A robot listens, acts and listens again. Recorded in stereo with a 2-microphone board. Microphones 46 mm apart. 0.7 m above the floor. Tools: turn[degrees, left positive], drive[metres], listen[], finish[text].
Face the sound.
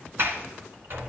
Thought: The sliding door: about 55° right or 125° right.
Action: turn[-55]
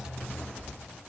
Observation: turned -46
Thought: So it is at 10° right.
Action: turn[-10]
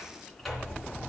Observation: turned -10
Action: finish[Facing the sliding door.]